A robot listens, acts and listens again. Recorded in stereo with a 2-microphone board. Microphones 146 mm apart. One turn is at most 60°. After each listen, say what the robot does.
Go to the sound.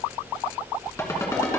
Keep listening.
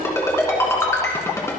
Turn 20° left.
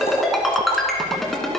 Drive 1.0 m forward.
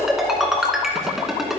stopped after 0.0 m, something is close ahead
Something is in my way. I am facing the ringtone but have not reached it.